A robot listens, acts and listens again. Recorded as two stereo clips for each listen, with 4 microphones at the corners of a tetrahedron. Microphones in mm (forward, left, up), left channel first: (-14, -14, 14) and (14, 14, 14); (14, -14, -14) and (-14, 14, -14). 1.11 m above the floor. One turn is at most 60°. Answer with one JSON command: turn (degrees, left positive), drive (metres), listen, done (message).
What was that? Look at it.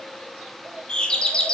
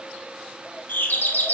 {"turn": -60}
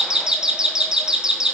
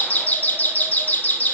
{"turn": -20}
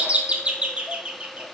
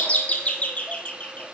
{"done": "Facing the doorbell, 1 to 2 m away."}